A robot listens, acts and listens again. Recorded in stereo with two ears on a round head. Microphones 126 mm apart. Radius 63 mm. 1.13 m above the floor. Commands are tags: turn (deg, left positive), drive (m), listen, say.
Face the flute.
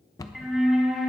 <turn deg="30"/>
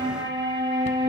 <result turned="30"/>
<turn deg="-30"/>
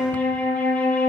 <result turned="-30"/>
<turn deg="10"/>
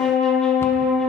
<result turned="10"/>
<say>Found it: a flute, straight ahead.</say>